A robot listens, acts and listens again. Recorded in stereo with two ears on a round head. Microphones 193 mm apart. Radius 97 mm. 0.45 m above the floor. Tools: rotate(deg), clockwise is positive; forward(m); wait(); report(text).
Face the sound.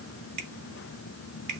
rotate(50)
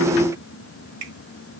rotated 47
rotate(80)
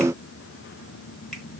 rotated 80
wait()
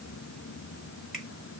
wait()
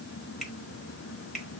report("Facing the finger snap.")